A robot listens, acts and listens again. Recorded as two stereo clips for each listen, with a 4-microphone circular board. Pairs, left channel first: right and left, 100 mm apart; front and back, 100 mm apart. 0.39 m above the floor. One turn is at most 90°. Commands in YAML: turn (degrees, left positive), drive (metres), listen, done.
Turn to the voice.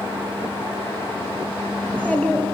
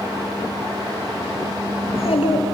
turn: -10
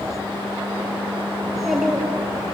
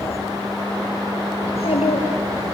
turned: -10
done: "Found it: a child speaking, straight ahead."